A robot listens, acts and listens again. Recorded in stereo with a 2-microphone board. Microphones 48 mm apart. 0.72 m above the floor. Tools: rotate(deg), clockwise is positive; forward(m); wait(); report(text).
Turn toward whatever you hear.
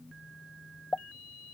rotate(-25)
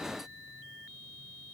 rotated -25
wait()
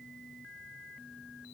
report("I heard a pop, but can't make it out now. It was about straight ahead or 130° left.")